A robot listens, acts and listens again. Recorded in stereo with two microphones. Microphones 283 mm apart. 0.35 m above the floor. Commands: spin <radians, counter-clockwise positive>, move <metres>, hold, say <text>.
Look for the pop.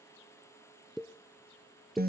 spin 0.52
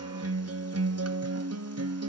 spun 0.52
hold
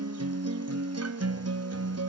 say I heard a pop, but can't make it out now. It was about 30° right or 150° left.